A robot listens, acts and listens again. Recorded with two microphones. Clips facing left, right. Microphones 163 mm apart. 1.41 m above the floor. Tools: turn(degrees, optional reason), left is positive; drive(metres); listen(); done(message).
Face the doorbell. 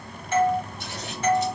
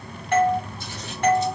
turn(degrees=-70, reason="The doorbell: about 70° right or 110° right.")
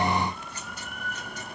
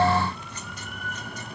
listen()
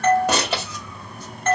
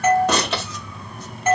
turn(degrees=-10, reason="So it is at 10° right.")
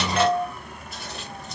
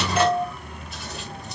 done("Facing the doorbell, under 1 m away.")